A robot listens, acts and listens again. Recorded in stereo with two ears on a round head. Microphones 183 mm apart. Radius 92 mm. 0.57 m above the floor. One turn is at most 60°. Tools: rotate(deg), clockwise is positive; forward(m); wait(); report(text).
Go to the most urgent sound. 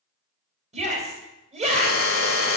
rotate(35)
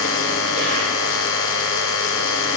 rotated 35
wait()
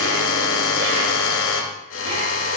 wait()
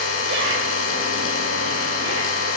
report("I heard a shout, but can't make it out now. It was about straight ahead or 110° right. I did not reach it.")